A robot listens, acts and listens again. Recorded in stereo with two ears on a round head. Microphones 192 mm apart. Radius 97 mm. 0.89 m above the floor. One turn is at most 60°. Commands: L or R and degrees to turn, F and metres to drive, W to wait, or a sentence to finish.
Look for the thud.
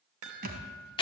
R45
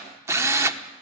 W
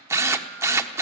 I heard a thud, but can't make it out now. It was about straight ahead or 90° right.